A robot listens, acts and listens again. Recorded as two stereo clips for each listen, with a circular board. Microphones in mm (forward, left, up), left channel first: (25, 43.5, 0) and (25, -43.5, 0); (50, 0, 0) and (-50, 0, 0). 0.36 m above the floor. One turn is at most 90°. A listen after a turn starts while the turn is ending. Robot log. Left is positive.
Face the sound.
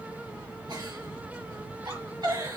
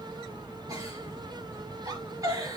note: The giggle: 125° right.
cmd yaw -90
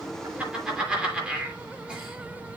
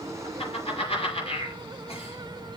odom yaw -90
note: The giggle is now 10° right.
cmd yaw -10
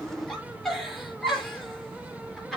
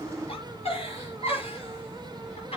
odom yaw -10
end: Facing the giggle, over 4 m away.